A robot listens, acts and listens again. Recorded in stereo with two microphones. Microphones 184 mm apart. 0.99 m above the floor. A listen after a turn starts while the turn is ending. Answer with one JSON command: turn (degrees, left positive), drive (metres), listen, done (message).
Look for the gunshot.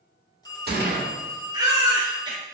{"turn": -65}
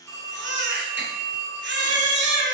{"listen": true}
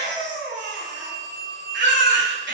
{"done": "I heard a gunshot, but can't make it out now. It was about straight ahead or 50° right."}